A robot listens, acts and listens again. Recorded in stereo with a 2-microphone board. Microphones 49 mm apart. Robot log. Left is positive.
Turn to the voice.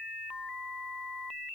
cmd idle
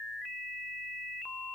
cmd idle
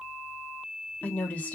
note: The woman speaking: about 30° left or 150° left.
cmd yaw +30
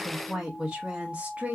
note: So it is at 30° right.
cmd yaw -30
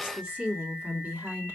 note: The woman speaking is now 25° right.
cmd yaw -25
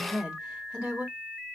note: The woman speaking is now 15° right.
cmd yaw -15
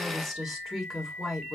end: Facing the woman speaking.